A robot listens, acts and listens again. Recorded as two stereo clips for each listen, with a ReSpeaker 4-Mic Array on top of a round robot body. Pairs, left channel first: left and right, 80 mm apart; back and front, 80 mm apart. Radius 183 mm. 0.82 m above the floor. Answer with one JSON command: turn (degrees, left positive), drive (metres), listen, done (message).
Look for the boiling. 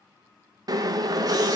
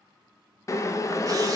{"turn": -130}
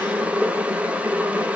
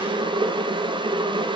{"turn": -15}
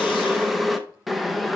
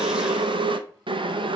{"done": "Found it: boiling, straight ahead."}